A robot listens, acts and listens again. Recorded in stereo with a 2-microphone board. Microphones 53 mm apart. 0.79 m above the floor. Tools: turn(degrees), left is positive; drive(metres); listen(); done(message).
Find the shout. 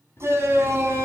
turn(degrees=-60)
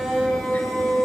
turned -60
done("Facing the shout, over 4 m away.")